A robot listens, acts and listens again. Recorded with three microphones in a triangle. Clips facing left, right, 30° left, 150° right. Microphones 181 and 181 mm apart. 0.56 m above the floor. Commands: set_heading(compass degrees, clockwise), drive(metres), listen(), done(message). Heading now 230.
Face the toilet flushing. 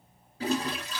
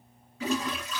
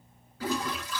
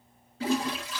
set_heading(85)
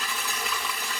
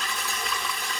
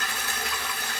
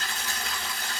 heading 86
done("Facing the toilet flushing.")